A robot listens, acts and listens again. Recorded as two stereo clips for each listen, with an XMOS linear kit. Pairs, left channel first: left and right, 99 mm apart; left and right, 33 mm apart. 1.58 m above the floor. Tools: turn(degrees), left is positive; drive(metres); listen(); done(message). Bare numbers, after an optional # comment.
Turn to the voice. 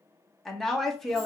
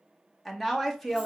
turn(30)
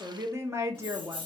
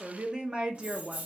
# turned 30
# So it is at 25° right.
turn(-25)
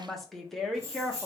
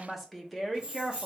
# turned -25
done("Facing the woman speaking, 1 to 2 m away.")